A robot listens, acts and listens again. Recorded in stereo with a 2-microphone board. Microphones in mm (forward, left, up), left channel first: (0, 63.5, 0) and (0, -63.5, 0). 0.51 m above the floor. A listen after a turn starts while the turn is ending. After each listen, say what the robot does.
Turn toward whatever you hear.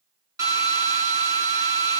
Turn 25° right.
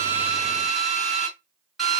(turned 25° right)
Facing the drill, 2 to 4 m away.